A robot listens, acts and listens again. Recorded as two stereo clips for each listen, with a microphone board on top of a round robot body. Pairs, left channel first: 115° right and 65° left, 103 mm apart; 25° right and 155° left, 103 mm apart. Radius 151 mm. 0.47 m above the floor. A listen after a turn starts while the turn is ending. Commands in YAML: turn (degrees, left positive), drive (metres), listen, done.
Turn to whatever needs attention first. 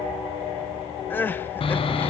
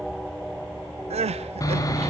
turn: 175
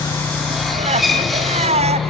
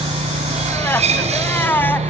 turn: 50
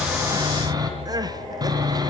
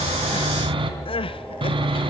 turn: 15
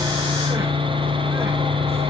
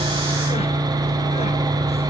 listen: true
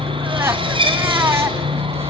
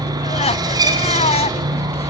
done: "Found it: crying, straight ahead."